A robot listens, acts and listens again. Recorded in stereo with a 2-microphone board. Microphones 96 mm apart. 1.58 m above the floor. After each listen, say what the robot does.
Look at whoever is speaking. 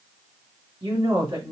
Turn 60° right.
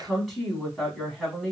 Facing the woman speaking, 2 to 4 m away.